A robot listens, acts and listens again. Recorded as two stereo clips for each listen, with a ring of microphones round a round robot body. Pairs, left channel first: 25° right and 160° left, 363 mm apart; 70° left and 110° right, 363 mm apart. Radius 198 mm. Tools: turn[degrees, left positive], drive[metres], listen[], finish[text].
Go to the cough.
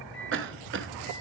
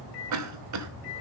Thought: The cough: 150° right.
Action: turn[-150]
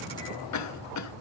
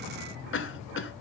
Thought: The cough is now 15° left.
Action: turn[15]
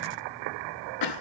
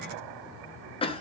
Action: drive[1.0]
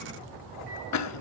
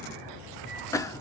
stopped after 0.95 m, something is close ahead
Thought: The cough is now 10° right.
Action: turn[-10]
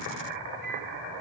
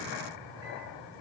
Action: listen[]
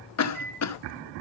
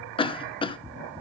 Action: finish[Arrived at the cough, straight ahead.]